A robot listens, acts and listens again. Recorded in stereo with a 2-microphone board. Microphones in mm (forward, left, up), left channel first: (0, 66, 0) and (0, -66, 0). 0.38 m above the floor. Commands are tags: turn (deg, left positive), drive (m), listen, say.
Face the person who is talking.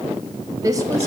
<turn deg="-25"/>
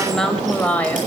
<turn deg="15"/>
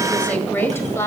<turn deg="20"/>
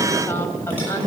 <turn deg="25"/>
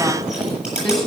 <say>Facing the woman speaking, 2 to 4 m away.</say>